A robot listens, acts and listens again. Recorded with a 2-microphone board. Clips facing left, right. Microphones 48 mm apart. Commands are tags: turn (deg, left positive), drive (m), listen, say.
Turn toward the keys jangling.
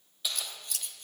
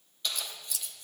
<turn deg="30"/>
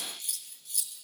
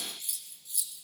<listen/>
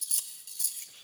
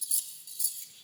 <listen/>
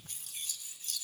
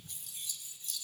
<say>I heard keys jangling, but can't make it out now. It was about 25° right or 145° left.</say>